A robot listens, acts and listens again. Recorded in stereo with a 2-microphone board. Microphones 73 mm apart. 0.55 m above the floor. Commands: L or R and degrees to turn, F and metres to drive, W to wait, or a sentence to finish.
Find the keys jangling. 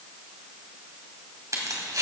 R50
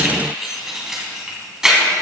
Facing the keys jangling.